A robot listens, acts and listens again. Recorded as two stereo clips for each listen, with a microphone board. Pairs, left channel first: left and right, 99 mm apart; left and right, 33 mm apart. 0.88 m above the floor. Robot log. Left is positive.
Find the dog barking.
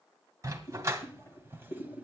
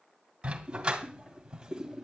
note: The dog barking: about 30° right or 150° right.
cmd yaw -30
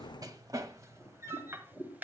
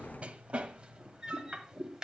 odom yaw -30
note: The dog barking: about 25° right or 155° right.
cmd yaw -25
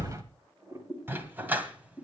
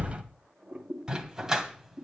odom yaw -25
note: The dog barking: about 15° right or 165° right.
cmd yaw -15
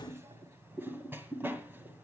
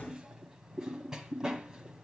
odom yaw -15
cmd idle
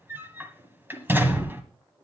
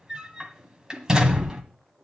note: The dog barking: about 20° right or 160° right.
cmd yaw -20
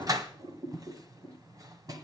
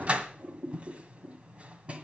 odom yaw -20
note: The dog barking: about 40° right or 140° right.
cmd yaw -40
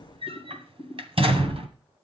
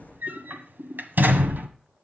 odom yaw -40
note: So it is at 110° right.
cmd yaw -110
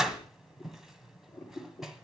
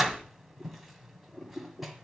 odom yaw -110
end: Found it: a dog barking, straight ahead.